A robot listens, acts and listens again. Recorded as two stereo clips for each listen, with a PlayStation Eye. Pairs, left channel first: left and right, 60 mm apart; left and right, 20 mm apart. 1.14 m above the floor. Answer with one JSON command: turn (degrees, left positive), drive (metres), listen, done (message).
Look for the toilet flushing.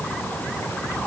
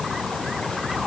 {"listen": true}
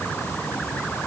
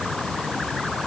{"listen": true}
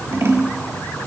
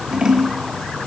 {"done": "I can't make out a toilet flushing to turn to."}